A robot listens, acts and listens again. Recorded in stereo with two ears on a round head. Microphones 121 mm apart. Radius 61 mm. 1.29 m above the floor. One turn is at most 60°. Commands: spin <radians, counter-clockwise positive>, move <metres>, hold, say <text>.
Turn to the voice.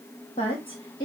spin 0.61
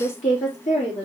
spin 1.05
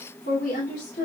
spin 1.05
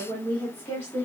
spin 0.35
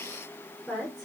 say Facing the woman speaking.